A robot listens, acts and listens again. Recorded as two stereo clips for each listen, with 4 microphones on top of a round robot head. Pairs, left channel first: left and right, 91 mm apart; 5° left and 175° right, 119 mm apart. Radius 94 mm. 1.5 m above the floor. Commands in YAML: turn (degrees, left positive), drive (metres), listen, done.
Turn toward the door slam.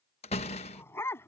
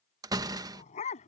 turn: 125
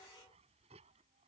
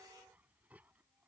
done: "I heard a door slam from this way, but can't make it out now."